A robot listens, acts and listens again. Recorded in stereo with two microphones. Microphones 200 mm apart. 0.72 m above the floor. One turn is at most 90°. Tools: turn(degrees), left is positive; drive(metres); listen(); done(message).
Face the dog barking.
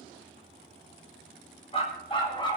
turn(degrees=20)
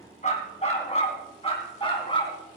turn(degrees=25)
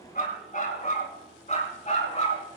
turn(degrees=35)
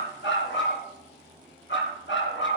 turn(degrees=90)
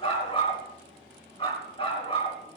turn(degrees=25)
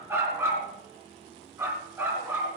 turn(degrees=-10)
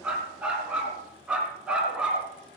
done("Found it: a dog barking, straight ahead, 2 to 4 m away.")